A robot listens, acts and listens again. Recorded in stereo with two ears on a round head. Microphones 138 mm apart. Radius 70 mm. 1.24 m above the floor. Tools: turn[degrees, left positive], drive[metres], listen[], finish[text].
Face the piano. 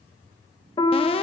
Thought: The piano: about 30° left or 150° left.
Action: turn[30]
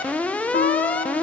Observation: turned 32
Thought: So it is at 115° left.
Action: turn[115]
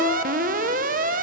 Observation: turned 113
Action: listen[]
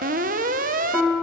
Action: finish[Facing the piano.]